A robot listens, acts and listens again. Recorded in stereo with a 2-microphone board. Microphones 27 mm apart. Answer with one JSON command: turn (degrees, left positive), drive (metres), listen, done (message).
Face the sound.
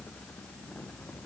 {"listen": true}
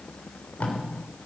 {"turn": 65}
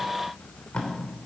{"turn": 45}
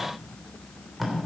{"done": "Facing the tape being pulled."}